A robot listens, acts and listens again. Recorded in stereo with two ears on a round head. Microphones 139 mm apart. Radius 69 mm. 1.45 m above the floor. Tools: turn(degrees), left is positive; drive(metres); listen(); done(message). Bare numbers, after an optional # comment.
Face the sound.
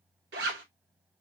turn(-90)
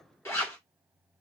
# So it is at 15° left.
turn(15)
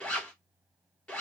done("Found it: a zipper, straight ahead.")